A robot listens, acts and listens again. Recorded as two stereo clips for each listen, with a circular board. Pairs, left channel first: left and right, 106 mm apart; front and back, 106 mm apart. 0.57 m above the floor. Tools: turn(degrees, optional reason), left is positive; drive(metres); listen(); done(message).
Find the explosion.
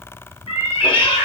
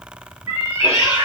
listen()
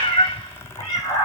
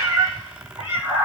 listen()
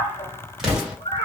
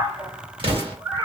turn(degrees=-175, reason="The explosion: 175° right.")
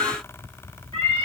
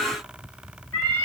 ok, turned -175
done("Facing where the explosion came from. I can't hear it now.")